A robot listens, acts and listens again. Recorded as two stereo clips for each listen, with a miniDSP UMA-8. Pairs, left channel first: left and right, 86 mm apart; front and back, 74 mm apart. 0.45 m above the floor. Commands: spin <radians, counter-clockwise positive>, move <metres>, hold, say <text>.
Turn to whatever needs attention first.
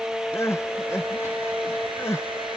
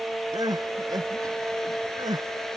spin 2.62
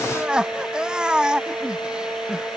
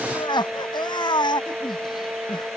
spin -0.17
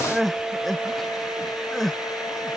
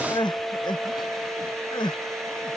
say Found it: crying, straight ahead.